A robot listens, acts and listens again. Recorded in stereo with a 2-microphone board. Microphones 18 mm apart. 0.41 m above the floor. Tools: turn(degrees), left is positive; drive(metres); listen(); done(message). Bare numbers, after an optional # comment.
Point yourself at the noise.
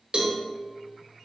# The cowbell: about 60° right or 120° right.
turn(-60)
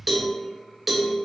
# So it is at 15° right.
turn(-15)
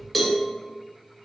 done("Facing the cowbell.")